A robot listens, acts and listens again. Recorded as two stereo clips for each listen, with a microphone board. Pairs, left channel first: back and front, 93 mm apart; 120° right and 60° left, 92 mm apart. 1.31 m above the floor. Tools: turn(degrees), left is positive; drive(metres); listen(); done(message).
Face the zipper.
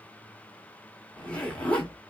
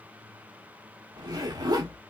turn(degrees=105)
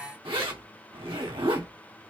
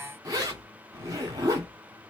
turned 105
turn(degrees=10)
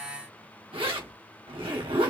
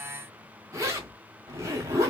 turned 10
done("Found it: a zipper, straight ahead, 1 to 2 m away.")